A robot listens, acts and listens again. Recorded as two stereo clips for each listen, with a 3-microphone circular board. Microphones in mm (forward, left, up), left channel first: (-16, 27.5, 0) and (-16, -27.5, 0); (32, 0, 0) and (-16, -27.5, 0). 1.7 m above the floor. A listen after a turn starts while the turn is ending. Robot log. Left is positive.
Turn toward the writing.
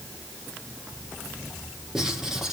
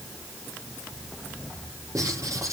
note: The writing: 170° right.
cmd yaw -170
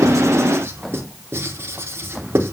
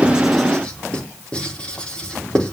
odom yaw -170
note: The writing is now 45° right.
cmd yaw -45
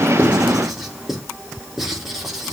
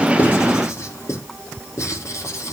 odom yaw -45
end: Found it: writing, straight ahead.